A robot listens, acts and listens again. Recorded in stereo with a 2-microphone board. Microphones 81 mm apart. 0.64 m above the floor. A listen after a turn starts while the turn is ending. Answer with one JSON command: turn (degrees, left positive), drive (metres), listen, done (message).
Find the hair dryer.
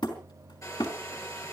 {"turn": 40}
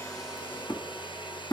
{"turn": 105}
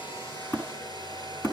{"turn": 60}
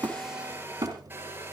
{"turn": -25}
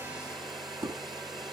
{"done": "Found it: a hair dryer, straight ahead."}